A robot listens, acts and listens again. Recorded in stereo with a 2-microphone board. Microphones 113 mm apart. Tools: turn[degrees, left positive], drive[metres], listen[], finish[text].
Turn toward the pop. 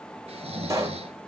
Thought: The pop: about 30° right or 150° right.
Action: turn[-30]
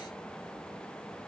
Action: listen[]
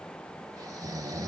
Action: finish[I heard a pop, but can't make it out now. It was about straight ahead or 120° right.]